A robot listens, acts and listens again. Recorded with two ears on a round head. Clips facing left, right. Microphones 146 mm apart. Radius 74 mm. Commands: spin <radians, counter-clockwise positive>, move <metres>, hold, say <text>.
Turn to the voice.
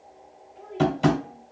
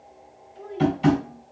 spin -0.87
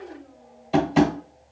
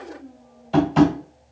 spin -1.48
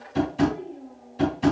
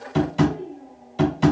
spin 0.35
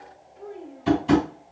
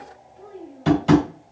say Found it: a child speaking, straight ahead.